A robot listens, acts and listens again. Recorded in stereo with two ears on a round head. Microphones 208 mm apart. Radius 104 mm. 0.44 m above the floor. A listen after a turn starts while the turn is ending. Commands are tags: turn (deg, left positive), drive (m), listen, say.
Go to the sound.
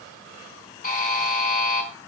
<turn deg="35"/>
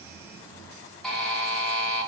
<drive m="1.0"/>
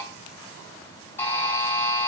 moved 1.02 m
<turn deg="10"/>
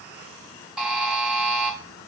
<drive m="1.0"/>
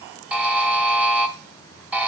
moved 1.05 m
<drive m="1.0"/>
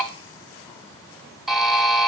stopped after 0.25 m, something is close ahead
<say>I am next to the buzzer.</say>